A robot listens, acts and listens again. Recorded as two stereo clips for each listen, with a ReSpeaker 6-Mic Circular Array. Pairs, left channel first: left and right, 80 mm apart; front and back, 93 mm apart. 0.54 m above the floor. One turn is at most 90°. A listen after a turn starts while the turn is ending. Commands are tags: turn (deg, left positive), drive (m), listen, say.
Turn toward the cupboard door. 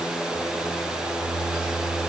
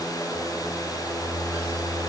<listen/>
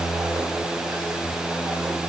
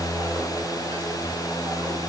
<listen/>
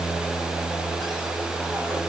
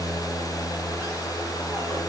<say>I can't make out a cupboard door.</say>